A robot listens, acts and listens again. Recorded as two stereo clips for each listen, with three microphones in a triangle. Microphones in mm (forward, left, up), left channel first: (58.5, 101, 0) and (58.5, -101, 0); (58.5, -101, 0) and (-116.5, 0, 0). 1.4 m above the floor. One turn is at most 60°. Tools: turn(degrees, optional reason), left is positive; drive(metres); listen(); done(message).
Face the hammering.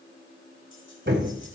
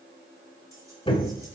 turn(degrees=-60, reason="The hammering: 90° right.")
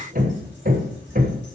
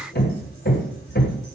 turn(degrees=-50, reason="The hammering is now 50° right.")
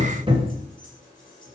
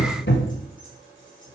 turn(degrees=-30, reason="The hammering is now 30° right.")
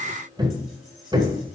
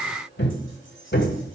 turn(degrees=-20, reason="The hammering is now 20° right.")
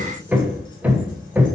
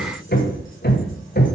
turn(degrees=-10, reason="The hammering is now 10° right.")
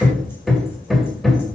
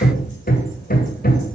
done("Facing the hammering, 1 to 2 m away.")